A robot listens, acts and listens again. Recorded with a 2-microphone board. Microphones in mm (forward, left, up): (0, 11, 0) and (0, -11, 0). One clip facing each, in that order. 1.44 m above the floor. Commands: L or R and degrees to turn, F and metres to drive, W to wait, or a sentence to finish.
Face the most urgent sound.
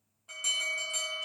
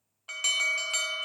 R55
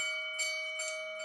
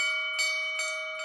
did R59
R65
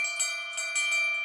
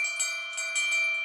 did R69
Found it: an alarm, straight ahead.